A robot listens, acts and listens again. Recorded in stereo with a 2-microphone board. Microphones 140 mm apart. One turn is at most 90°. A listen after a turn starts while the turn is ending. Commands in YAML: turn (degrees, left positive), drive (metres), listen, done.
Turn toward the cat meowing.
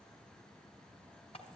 listen: true
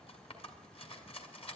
listen: true
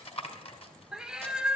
turn: -30
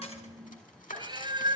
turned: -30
turn: -90
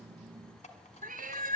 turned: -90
turn: -90
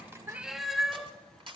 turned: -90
done: "Found it: a cat meowing, straight ahead."